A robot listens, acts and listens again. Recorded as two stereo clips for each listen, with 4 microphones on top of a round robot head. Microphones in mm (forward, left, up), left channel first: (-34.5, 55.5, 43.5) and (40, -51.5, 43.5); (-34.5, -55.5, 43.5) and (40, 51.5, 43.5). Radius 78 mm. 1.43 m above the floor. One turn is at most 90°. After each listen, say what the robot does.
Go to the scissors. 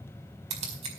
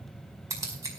Turn 15° right.
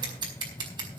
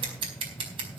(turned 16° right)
Drive 1.0 m forward.
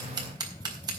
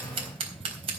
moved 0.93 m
Drive 1.0 m forward.
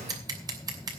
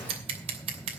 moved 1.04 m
Turn 10° left.
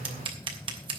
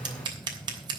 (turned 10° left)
Drive 1.0 m forward.
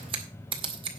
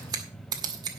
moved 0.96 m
Drive 1.0 m forward.
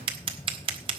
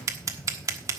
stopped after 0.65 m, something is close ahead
Turn 10° right.
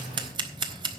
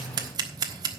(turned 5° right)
I am next to the scissors.